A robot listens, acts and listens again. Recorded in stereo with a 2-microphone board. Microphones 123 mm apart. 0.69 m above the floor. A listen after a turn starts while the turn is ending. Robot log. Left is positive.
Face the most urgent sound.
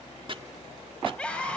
cmd yaw +30
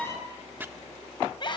note: So it is at 140° left.
cmd yaw +140
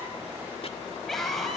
end: Facing the scream, over 4 m away.